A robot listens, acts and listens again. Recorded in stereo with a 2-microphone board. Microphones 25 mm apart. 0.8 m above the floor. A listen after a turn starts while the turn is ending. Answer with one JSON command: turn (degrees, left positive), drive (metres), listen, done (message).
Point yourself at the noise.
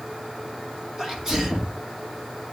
{"turn": -20}
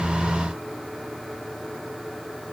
{"listen": true}
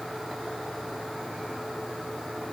{"done": "I heard a sneeze, but can't make it out now. It was about straight ahead or 140° right."}